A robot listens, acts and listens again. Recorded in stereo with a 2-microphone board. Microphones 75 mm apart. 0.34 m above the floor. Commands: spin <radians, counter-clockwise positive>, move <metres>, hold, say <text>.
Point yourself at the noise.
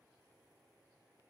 hold
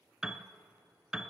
spin -0.52
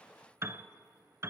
spin -2.44
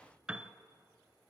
spin -0.17
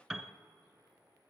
say Facing the piano.